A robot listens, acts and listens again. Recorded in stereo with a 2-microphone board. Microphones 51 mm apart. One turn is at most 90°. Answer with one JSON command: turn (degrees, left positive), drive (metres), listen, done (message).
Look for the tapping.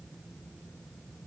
{"listen": true}
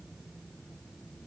{"listen": true}
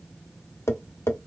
{"turn": 60}
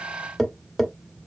{"done": "Facing the tapping, under 1 m away."}